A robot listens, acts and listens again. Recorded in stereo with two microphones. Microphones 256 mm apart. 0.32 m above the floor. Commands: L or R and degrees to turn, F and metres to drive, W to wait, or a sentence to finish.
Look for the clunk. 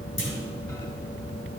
L50
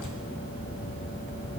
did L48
W
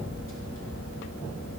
I heard a clunk, but can't make it out now. It was about 5° left or 80° left.